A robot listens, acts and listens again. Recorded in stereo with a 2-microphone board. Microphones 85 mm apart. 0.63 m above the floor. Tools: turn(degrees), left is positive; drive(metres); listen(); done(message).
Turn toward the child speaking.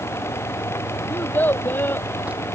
turn(degrees=25)
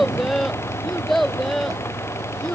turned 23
done("Found it: a child speaking, straight ahead.")